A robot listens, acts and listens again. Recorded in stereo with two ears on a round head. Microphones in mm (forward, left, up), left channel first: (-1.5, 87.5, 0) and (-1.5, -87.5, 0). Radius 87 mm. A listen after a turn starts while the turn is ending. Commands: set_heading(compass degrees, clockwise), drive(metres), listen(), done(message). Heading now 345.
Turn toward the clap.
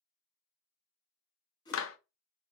set_heading(255)
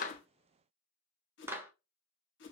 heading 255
set_heading(265)
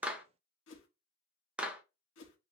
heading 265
done("Facing the clap, 1 to 2 m away.")